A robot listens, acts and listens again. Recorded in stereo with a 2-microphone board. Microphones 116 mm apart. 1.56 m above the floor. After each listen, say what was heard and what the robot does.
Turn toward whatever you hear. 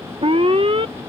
The alarm: about 50° right or 130° right. Turn 50° right.
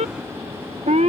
So it is at 80° right. Turn 80° right.
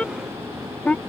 The alarm is now 10° left. Turn 10° left.
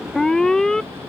Facing the alarm.